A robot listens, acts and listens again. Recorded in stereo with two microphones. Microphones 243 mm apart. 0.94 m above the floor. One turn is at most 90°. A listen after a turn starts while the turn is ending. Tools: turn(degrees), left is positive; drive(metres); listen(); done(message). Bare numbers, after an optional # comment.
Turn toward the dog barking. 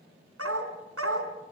# The dog barking: about 65° right or 115° right.
turn(-65)
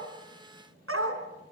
# So it is at 65° right.
turn(-65)
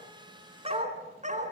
# The dog barking is now 30° right.
turn(-30)
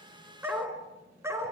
# The dog barking is now 10° right.
turn(-10)
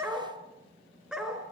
done("Facing the dog barking, 2 to 4 m away.")